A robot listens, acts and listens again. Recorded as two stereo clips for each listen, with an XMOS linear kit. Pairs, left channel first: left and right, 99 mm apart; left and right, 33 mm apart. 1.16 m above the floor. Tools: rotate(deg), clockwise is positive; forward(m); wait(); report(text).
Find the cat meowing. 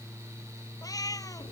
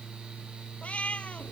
rotate(-40)
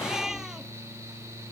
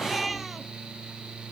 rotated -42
wait()
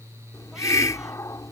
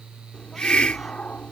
wait()
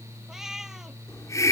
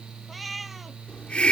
report("Facing the cat meowing.")